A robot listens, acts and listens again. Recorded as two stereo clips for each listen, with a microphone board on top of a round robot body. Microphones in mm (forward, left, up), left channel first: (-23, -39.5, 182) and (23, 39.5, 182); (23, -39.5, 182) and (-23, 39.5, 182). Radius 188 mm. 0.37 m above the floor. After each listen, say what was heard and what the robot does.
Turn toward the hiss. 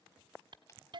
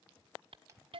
The hiss: 100° left. Turn 100° left.
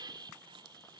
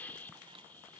The hiss is now 15° left. Turn 15° left.
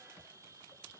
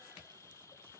Found it: a hiss, straight ahead.